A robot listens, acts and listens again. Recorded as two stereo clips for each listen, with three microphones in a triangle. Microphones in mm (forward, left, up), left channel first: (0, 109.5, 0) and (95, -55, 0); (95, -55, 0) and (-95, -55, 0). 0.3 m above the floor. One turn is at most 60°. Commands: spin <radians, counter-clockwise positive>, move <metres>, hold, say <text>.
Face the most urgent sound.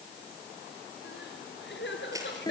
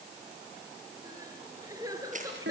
spin 1.05
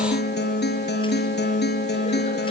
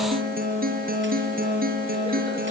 spin 0.87
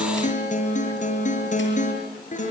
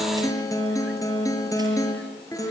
hold
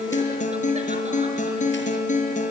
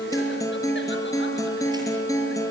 say I heard crying from this way, but can't make it out now.